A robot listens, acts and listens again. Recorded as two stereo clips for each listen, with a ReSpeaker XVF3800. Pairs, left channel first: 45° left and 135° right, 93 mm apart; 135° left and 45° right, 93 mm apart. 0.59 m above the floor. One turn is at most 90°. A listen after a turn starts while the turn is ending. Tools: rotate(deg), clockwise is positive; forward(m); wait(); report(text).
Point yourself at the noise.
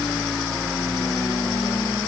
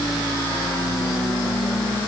wait()
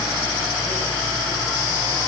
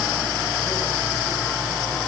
wait()
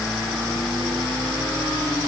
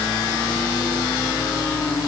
report("I can't make out anything to turn to.")